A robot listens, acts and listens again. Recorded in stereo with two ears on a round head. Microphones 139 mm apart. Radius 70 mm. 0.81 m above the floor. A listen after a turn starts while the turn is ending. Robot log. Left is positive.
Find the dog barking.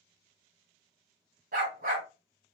note: The dog barking: about 55° right or 125° right.
cmd yaw -55
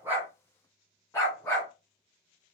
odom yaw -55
note: So it is at 20° left.
cmd yaw +20
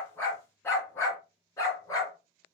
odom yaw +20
note: The dog barking is now 20° left.
cmd yaw +20
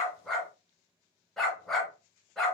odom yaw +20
end: Found it: a dog barking, straight ahead, 2 to 4 m away.